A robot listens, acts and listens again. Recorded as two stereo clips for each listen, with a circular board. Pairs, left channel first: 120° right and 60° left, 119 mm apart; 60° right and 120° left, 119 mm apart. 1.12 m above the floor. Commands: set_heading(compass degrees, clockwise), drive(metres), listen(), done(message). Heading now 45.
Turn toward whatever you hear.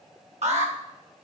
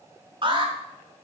set_heading(330)
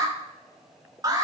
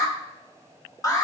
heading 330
done("Facing the alarm.")